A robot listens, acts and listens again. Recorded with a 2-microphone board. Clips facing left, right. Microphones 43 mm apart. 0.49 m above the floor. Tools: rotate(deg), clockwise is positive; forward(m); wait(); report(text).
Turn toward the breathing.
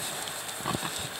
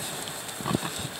wait()
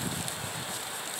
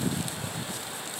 wait()
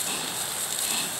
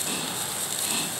report("I can't make out breathing to turn to.")